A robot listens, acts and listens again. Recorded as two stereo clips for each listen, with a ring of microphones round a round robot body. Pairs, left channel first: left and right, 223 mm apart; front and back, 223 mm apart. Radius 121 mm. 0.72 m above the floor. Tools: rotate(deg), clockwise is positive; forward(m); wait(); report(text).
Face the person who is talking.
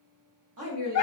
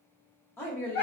rotate(80)
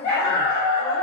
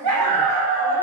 wait()
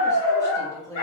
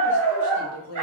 rotate(-15)
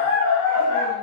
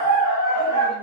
wait()
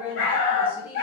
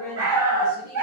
rotate(10)
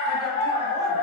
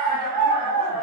wait()
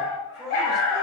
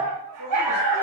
report("Found it: a woman speaking, straight ahead.")